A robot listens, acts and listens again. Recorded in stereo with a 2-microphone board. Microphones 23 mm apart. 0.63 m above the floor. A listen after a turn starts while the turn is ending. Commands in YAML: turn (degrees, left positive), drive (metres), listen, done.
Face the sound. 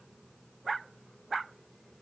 listen: true
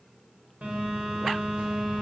turn: -70
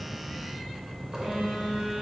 turn: -25
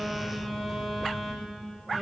done: "Facing the phone buzzing."